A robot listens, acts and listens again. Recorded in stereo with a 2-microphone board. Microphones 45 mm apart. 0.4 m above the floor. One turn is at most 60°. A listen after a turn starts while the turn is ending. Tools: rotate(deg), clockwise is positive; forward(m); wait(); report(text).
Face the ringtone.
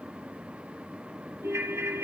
rotate(60)
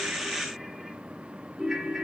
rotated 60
rotate(10)
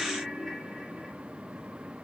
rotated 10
report("Facing the ringtone, 1 to 2 m away.")